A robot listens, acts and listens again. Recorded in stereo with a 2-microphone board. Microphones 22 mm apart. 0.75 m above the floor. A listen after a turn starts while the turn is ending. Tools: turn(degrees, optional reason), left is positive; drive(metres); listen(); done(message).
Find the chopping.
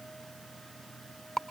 listen()
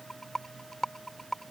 listen()
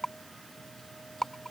done("I can't make out chopping, only a rattle.")